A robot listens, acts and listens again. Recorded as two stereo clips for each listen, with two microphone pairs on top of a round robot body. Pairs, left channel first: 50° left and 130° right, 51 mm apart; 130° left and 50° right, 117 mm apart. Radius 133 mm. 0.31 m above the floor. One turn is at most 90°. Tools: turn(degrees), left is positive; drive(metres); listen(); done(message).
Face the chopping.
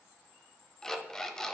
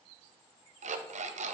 listen()
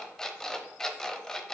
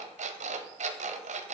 listen()
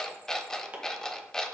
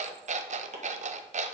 turn(degrees=-65)
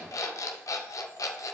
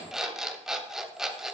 listen()
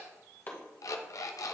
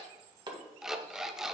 done("Facing the chopping.")